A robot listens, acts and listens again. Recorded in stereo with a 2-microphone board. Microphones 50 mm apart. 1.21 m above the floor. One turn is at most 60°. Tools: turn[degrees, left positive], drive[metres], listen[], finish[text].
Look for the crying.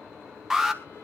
Action: listen[]
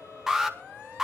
Action: listen[]
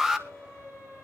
Action: finish[I can't make out crying to turn to.]